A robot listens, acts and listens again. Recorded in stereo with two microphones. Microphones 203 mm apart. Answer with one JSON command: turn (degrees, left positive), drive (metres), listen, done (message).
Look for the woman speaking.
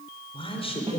{"turn": 30}
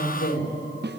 {"turn": 120}
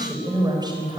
{"turn": -20}
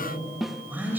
{"turn": -10}
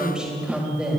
{"done": "Found it: a woman speaking, straight ahead, over 4 m away."}